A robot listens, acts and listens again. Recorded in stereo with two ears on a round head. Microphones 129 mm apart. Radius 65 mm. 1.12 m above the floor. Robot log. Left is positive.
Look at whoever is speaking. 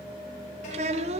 note: The child speaking: about 45° right or 135° right.
cmd yaw -45
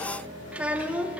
note: So it is at 10° right.
cmd yaw -10
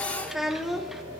end: Facing the child speaking.